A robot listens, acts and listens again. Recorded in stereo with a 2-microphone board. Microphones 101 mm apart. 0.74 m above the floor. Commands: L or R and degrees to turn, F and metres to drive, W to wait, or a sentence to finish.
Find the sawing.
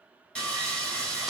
L30
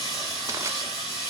L135
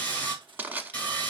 L15
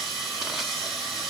Found it: sawing, straight ahead.